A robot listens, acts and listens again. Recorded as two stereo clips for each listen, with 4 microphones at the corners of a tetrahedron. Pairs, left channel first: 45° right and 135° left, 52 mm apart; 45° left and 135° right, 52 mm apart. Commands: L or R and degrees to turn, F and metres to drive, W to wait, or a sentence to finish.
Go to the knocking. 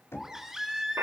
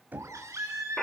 R80
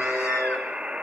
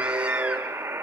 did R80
W
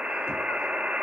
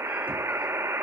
W
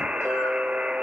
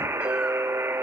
Facing where the knocking came from. I can't hear it now. I did not reach it.